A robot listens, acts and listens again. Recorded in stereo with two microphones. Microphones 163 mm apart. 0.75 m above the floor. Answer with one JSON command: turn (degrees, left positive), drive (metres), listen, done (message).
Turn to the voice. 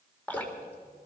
{"listen": true}
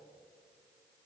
{"listen": true}
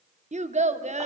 {"turn": -45}
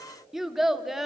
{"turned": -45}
{"done": "Found it: a child speaking, straight ahead, under 1 m away."}